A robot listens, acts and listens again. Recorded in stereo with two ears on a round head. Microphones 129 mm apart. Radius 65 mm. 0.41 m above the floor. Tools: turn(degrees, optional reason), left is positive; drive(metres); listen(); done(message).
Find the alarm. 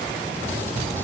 listen()
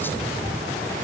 listen()
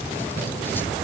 done("I can't make out an alarm.")